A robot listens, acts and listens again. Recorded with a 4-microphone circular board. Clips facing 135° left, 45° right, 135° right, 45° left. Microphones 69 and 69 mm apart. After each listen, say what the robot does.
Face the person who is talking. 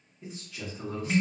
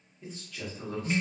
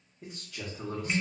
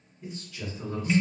Turn 145° right.
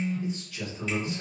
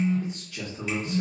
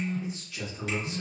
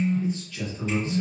Turn 60° right.
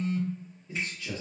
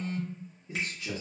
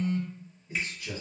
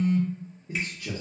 Turn 25° left.
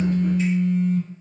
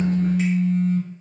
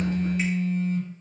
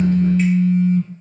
Keep listening.
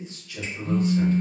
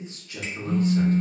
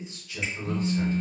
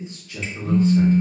Facing the man speaking, 1 to 2 m away.